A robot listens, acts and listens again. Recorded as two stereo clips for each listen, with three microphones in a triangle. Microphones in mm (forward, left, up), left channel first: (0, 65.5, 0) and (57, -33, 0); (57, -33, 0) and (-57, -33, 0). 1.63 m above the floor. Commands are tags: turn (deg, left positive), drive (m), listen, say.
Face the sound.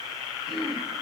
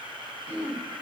<turn deg="-145"/>
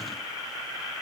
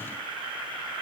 <listen/>
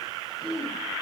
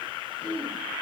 <turn deg="-20"/>
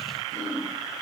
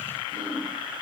<say>Facing the throat clearing.</say>